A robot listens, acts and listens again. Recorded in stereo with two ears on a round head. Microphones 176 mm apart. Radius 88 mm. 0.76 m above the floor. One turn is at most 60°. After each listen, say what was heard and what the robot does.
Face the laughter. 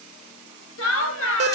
Turn 60° left.
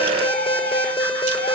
Nothing new. It was at 30° left. Turn 30° left.
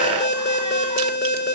Keep listening.
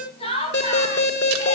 The laughter is now 30° left. Turn 30° left.
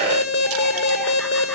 Keep listening.
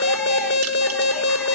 Keep listening.
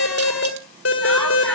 Facing where the laughter came from. I can't hear it now.